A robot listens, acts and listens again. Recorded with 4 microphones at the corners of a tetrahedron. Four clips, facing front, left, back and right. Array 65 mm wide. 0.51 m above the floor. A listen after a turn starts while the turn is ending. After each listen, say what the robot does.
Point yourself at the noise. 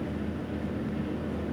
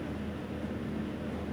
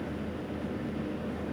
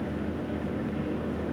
Keep listening.
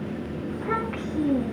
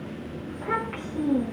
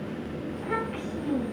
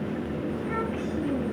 Turn 55° left.
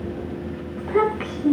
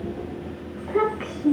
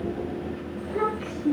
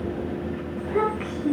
Turn 15° left.
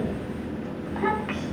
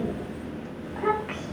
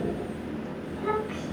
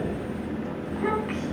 Found it: a child speaking, straight ahead.